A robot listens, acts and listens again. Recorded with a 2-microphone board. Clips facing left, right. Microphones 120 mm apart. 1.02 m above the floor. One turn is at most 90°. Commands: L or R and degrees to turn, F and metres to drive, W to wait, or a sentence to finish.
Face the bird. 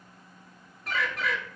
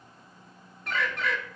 L30
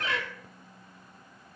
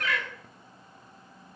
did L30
L90
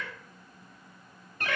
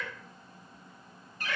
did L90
L80
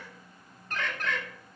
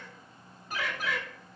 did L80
R10
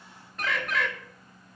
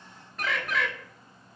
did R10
Found it: a bird, straight ahead.